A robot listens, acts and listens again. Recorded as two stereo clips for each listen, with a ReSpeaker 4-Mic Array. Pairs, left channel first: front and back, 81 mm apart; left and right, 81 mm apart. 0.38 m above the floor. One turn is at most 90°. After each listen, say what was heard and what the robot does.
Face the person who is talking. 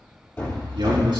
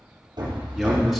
The man speaking: straight behind. Turn 90° left.
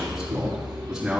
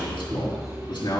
The man speaking is now 100° left. Turn 90° left.
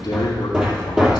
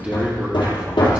The man speaking is now 15° right. Turn 15° right.
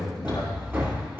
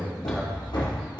Found it: a man speaking, straight ahead, 2 to 4 m away.